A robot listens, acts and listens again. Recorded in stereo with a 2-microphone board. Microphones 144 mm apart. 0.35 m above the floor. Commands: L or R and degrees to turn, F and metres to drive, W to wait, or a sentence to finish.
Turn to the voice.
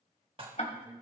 R15
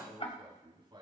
R145
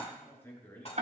L15
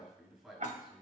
Found it: a man speaking, straight ahead, over 4 m away.